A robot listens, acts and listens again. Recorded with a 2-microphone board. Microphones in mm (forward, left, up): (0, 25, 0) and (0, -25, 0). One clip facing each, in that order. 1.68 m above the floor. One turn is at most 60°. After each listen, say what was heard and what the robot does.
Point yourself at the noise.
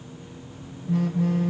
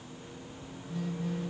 Turn 60° left.
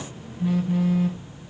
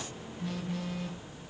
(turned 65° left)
So it is at 10° left. Turn 10° left.
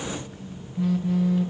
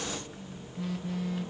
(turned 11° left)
Found it: a phone buzzing, straight ahead, 1 to 2 m away.